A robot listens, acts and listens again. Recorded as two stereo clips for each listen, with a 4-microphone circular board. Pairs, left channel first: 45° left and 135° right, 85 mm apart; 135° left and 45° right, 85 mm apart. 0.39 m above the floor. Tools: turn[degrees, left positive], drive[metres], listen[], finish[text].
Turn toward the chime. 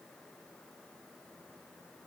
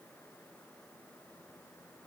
Action: listen[]
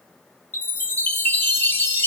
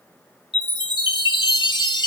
Thought: The chime: 110° left.
Action: turn[110]
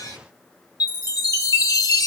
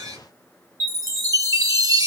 Action: finish[Found it: a chime, straight ahead.]